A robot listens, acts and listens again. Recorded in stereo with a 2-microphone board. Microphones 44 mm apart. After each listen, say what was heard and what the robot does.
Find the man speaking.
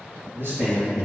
The man speaking: about 55° right or 125° right. Turn 55° right.
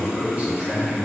So it is at 25° right. Turn 25° right.
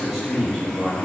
The man speaking is now 10° left. Turn 10° left.
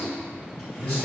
The man speaking is now 25° left. Turn 25° left.
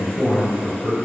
The man speaking is now 20° left. Turn 20° left.
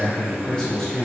The man speaking is now 15° left. Turn 15° left.
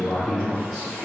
Facing the man speaking, 1 to 2 m away.